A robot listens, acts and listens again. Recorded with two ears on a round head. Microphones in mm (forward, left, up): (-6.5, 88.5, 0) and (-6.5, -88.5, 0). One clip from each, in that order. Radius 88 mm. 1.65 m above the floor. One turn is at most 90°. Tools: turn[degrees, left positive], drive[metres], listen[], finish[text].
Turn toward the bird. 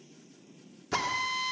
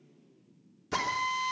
Action: listen[]
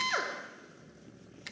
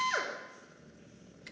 Action: listen[]
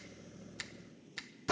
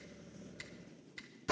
Action: finish[I can't make out a bird, only a finger snap and a drill.]